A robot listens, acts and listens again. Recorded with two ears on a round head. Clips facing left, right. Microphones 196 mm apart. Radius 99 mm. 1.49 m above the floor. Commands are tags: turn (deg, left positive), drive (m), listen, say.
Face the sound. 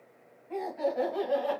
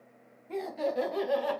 <turn deg="-50"/>
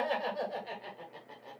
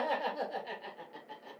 <turn deg="-10"/>
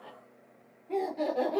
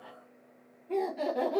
<turn deg="-15"/>
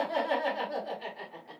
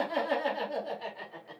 <turn deg="-10"/>
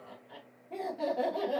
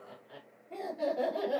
<say>Facing the laughter, 2 to 4 m away.</say>